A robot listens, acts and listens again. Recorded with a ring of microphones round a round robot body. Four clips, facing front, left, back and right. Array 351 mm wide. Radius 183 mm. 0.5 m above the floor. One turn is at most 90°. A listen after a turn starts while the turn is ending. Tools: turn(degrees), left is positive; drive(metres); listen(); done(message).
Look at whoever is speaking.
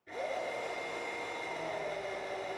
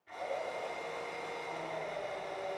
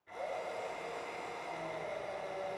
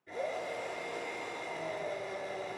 listen()
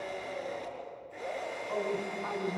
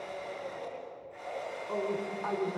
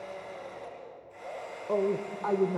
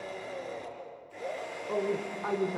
turn(degrees=-90)
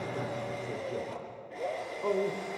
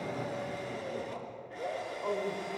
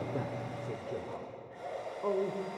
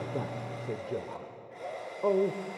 turn(degrees=-85)
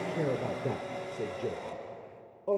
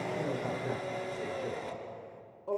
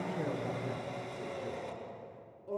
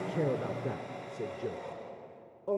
turn(degrees=-30)
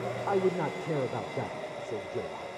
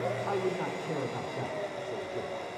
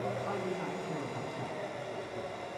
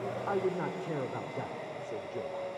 listen()
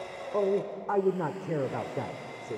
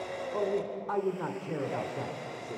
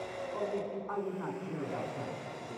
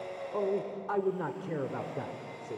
turn(degrees=-10)
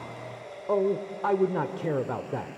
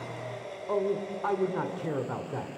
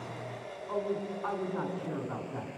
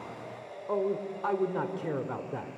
done("Found it: a man speaking, straight ahead.")